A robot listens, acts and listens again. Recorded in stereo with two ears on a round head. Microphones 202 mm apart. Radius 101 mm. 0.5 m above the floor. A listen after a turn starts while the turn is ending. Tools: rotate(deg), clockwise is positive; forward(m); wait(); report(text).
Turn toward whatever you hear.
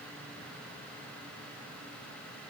wait()
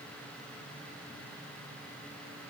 wait()
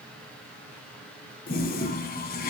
rotate(-40)
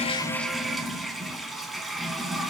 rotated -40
report("Facing the toilet flushing, under 1 m away.")